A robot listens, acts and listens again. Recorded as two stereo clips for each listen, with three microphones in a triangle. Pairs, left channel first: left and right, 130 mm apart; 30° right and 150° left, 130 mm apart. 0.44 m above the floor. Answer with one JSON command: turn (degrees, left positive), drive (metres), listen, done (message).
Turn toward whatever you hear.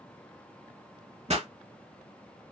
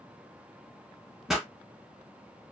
{"turn": -120}
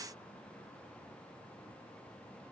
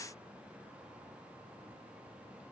{"done": "Facing where the pop came from. I can't hear it now."}